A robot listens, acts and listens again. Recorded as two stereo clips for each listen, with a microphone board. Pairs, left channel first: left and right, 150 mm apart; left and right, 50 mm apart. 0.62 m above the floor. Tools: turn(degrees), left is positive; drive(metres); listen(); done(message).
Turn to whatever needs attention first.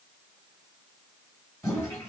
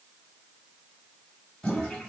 listen()
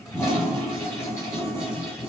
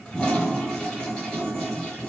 listen()
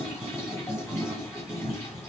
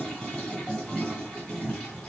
done("I can't make out anything urgent, only a toilet flushing.")